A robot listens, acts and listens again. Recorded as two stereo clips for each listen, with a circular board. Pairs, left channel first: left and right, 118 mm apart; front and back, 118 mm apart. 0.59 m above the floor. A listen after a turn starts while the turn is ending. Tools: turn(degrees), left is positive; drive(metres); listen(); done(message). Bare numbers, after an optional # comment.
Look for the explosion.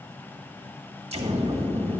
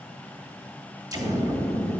# The explosion: 120° right.
turn(-120)
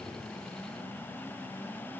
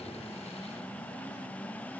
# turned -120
done("Facing where the explosion came from. I can't hear it now.")